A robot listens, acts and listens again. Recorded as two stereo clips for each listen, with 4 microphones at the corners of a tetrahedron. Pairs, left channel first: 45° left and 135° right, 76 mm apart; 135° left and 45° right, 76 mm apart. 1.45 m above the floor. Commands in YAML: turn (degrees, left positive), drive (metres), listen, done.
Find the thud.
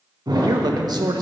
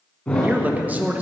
turn: -150
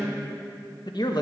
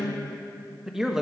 done: "I heard a thud from this way, but can't make it out now."